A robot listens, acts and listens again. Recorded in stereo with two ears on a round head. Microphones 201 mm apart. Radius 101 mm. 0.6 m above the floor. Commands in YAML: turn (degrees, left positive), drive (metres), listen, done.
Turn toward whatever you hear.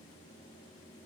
listen: true
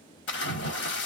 turn: 50
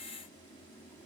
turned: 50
listen: true
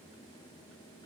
done: "I heard a splash, but can't make it out now. It was about straight ahead or 80° left."